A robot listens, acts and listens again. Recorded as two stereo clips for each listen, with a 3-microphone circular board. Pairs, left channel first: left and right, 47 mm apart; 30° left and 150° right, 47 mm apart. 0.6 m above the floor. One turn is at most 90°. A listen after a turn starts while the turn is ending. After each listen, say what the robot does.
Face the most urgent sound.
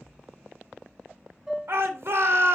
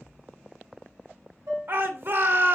Turn 90° right.
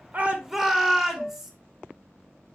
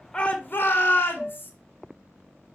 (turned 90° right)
Turn 10° right.
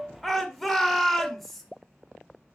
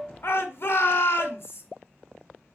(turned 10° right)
Found it: a shout, straight ahead, 2 to 4 m away.